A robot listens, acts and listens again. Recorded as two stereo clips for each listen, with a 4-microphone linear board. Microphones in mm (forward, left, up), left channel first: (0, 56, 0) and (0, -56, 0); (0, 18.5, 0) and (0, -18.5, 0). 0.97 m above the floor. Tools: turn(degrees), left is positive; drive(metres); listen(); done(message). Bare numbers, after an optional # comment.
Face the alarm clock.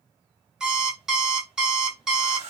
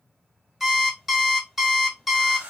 turn(-30)
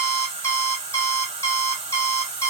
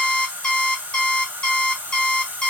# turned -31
# So it is at 25° left.
turn(25)
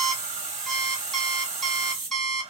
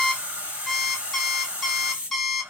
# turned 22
done("Found it: an alarm clock, straight ahead, under 1 m away.")